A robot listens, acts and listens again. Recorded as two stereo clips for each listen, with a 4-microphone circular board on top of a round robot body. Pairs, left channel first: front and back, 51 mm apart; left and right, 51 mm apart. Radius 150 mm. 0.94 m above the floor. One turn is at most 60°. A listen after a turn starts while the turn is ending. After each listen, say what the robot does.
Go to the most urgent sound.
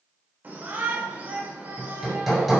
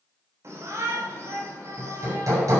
Turn 60° right.
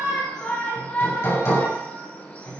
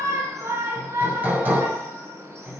Turn 60° right.
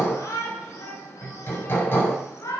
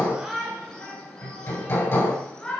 Turn 15° left.
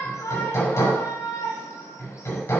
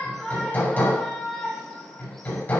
Drive 1.0 m forward.
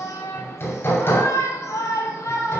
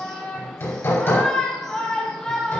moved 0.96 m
Turn 10° left.
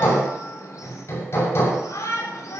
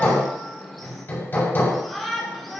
Drive 1.0 m forward.
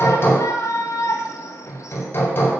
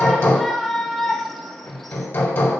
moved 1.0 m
Drive 1.0 m forward.
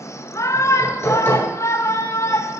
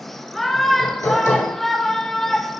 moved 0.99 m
Drive 1.0 m forward.
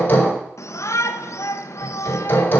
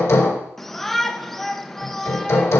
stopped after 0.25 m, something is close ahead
I am next to the shout.